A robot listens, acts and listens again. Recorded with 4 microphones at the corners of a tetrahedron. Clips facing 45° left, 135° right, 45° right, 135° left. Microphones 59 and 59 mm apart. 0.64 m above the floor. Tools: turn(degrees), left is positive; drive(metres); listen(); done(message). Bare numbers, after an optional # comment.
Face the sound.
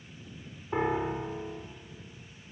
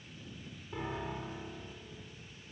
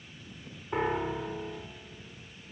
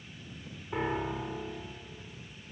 # The piano: 25° left.
turn(25)
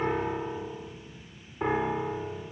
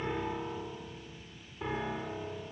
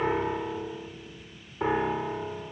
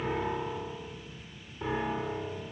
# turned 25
done("Facing the piano, 2 to 4 m away.")